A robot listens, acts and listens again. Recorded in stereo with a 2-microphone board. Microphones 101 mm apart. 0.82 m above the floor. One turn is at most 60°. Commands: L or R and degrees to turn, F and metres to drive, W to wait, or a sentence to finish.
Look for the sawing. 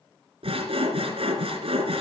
R60
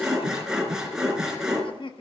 Facing the sawing.